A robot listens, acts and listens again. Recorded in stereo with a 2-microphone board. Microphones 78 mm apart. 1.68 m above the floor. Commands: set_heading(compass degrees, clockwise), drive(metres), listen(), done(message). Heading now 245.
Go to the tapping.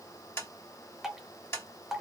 set_heading(210)
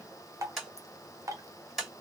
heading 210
drive(1.0)
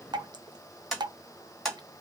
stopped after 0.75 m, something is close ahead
done("Arrived at the tapping, straight ahead.")